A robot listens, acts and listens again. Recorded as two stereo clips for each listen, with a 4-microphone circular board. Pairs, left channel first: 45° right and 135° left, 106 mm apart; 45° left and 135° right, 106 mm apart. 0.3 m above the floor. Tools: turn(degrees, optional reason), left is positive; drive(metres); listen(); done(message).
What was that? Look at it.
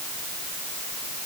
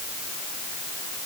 listen()
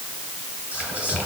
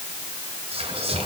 turn(degrees=-145, reason="The whispering: 145° right.")
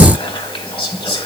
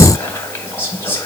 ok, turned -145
turn(degrees=-20, reason="The whispering is now 20° right.")
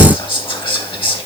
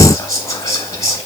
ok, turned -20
turn(degrees=-10, reason="The whispering is now 10° right.")
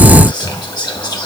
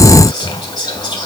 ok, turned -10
done("Facing the whispering, 2 to 4 m away.")